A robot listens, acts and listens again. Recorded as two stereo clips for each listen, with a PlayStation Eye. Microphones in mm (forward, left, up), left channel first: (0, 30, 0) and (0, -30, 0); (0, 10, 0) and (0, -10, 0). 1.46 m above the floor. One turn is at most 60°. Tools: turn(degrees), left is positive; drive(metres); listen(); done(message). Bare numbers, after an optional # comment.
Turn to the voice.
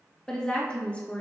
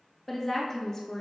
# The woman speaking: about 25° left or 155° left.
turn(25)
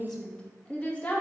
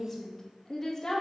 # The woman speaking: about 25° left or 155° left.
turn(25)
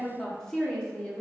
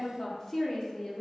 # The woman speaking: about 20° left or 160° left.
turn(20)
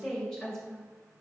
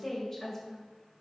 turn(30)
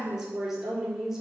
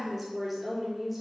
# So it is at 15° right.
turn(-15)
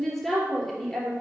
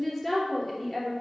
done("Facing the woman speaking, 2 to 4 m away.")